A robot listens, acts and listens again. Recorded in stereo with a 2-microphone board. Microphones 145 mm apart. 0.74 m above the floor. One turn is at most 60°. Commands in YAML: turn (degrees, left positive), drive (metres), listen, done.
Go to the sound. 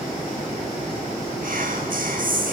turn: -60
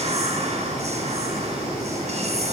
turn: -45
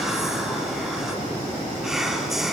drive: 1.0
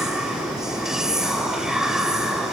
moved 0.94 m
drive: 1.0
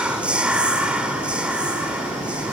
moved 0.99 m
drive: 1.0
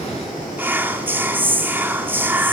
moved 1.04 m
turn: -15
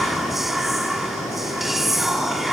drive: 1.0
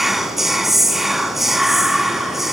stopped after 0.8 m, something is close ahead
done: "Arrived at the whispering, straight ahead."